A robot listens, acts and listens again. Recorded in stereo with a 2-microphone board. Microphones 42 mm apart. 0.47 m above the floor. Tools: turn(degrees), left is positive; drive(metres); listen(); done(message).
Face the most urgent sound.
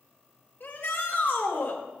turn(degrees=55)
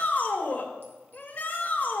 turn(degrees=50)
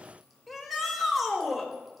done("Facing the shout, 2 to 4 m away.")